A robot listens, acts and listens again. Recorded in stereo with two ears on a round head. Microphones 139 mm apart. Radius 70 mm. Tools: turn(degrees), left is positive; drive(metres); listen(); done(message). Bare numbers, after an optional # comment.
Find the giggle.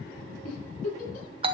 # The giggle: about 50° left or 130° left.
turn(50)
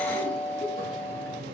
listen()
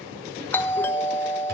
listen()
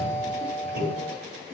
done("I heard a giggle, but can't make it out now. It was about straight ahead or 80° left.")